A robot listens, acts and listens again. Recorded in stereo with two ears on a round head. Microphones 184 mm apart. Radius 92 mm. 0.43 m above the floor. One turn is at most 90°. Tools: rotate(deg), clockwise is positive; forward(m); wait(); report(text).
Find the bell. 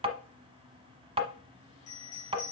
rotate(-25)
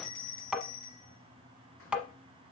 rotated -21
rotate(-90)
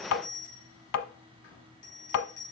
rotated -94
rotate(-40)
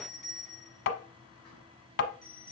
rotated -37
report("Facing the bell, over 4 m away.")